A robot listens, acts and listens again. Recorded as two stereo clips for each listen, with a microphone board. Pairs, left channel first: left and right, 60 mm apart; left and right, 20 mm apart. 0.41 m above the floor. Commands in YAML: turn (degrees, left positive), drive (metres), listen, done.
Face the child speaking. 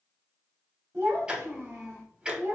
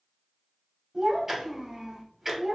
turn: -40
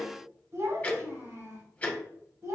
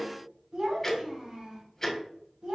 turn: -110
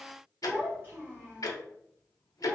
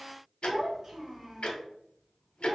turn: -25
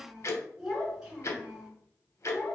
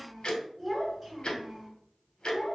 done: "Found it: a child speaking, straight ahead, 2 to 4 m away."